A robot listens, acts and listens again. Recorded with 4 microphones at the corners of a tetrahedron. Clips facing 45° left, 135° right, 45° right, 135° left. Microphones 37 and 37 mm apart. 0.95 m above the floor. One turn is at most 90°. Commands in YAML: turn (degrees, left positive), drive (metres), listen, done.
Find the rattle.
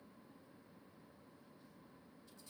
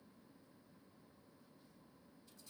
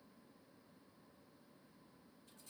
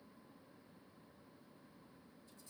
listen: true
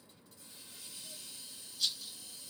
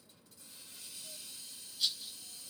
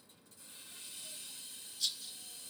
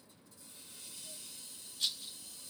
turn: 90
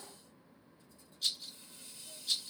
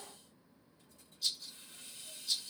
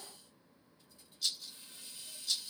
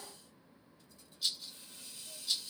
turn: 65
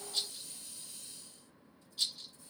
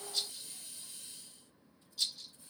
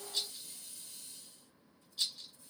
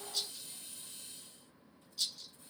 done: "Facing the rattle."